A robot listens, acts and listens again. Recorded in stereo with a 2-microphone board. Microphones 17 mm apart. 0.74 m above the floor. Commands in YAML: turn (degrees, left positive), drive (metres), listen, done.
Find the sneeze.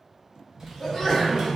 turn: 30
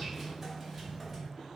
listen: true
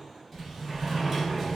done: "I heard a sneeze, but can't make it out now. It was about straight ahead or 120° left."